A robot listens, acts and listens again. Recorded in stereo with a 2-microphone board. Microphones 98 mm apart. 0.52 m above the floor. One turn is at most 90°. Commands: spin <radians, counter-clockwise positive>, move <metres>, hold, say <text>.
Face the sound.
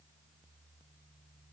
hold
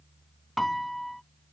spin 0.52
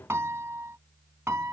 spin -0.52
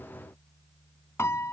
spin 0.44
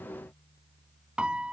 spin -0.17
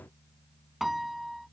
say Found it: a piano, straight ahead.